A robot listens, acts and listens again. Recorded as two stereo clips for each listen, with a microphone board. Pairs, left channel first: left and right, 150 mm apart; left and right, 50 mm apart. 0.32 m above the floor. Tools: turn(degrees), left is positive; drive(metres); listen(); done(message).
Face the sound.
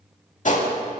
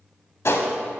turn(degrees=55)
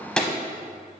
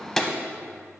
done("Facing the gunshot.")